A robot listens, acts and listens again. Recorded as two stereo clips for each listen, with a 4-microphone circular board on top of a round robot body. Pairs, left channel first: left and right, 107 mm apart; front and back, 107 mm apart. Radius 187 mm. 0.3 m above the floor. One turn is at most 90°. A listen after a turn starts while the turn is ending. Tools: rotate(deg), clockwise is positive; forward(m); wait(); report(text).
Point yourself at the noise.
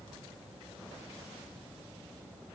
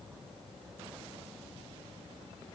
wait()
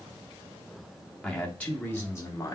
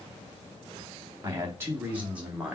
rotate(-90)
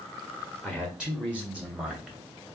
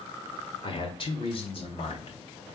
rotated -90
rotate(15)
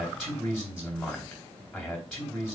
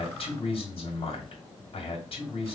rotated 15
report("Facing the man speaking, 1 to 2 m away.")